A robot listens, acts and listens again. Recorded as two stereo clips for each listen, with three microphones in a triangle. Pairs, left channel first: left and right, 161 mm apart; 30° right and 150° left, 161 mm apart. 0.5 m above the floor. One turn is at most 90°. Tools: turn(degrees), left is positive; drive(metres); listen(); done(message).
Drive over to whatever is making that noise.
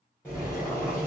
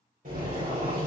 turn(degrees=90)
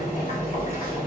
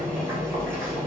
turn(degrees=55)
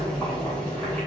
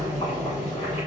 drive(metres=1.0)
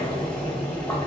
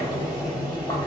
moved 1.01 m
turn(degrees=15)
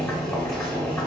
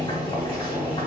turn(degrees=10)
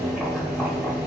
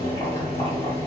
drive(metres=1.0)
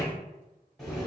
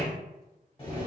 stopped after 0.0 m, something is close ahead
done("Arrived at the boiling, straight ahead.")